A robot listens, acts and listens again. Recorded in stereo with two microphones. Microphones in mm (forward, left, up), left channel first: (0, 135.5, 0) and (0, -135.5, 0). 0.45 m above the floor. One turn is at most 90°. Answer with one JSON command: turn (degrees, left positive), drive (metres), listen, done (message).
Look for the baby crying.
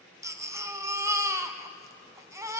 {"turn": -30}
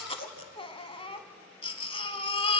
{"turn": 20}
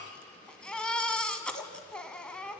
{"done": "Facing the baby crying, 1 to 2 m away."}